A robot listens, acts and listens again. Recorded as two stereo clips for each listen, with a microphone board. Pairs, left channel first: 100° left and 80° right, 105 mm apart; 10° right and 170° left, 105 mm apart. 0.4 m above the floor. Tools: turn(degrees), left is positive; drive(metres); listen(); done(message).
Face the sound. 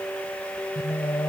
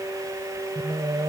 turn(degrees=150)
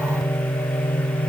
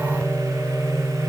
turn(degrees=80)
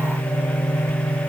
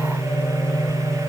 turn(degrees=50)
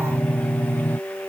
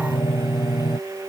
turn(degrees=25)
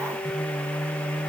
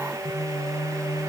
turn(degrees=15)
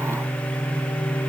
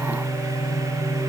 done("Found it: singing, straight ahead.")